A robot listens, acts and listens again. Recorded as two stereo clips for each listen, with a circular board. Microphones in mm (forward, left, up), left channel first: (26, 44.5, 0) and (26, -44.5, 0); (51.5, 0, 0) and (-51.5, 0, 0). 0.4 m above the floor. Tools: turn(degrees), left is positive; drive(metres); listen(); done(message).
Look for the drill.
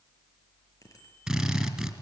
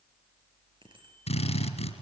done("Found it: a drill, straight ahead, 2 to 4 m away.")